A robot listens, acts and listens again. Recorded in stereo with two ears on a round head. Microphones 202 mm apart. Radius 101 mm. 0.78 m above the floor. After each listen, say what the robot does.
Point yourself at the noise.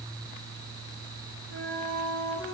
Turn 70° right.
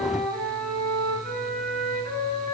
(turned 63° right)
Turn 50° right.
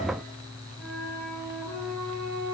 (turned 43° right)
Found it: a flute, straight ahead.